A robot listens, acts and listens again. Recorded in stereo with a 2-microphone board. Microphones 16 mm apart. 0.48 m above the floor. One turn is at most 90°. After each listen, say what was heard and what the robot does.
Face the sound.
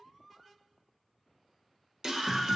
The scream: about 35° right or 145° right. Turn 35° right.
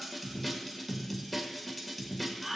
Found it: a scream, straight ahead, 1 to 2 m away.